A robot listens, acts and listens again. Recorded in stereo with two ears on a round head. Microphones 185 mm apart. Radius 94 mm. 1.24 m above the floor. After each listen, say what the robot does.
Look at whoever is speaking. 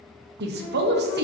Turn 55° right.
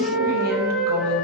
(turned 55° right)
Keep listening.
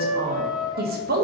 Turn 55° right.
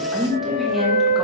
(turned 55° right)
Found it: a woman speaking, straight ahead.